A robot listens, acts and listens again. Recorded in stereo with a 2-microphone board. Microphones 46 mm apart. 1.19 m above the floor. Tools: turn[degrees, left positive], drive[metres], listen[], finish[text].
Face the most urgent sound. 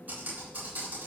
Action: listen[]
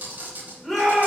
Action: turn[30]
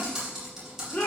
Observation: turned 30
Thought: So it is at 145° left.
Action: turn[145]
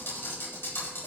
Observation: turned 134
Thought: Nothing new. It was at 15° left.
Action: turn[15]
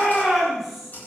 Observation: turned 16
Action: finish[Found it: a shout, straight ahead, 2 to 4 m away.]